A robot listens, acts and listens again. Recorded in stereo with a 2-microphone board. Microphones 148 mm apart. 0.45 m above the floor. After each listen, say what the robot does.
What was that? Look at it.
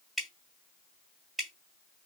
Turn 30° left.
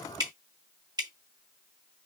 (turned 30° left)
Turn 35° right.
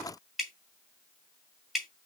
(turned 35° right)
Found it: dripping, straight ahead.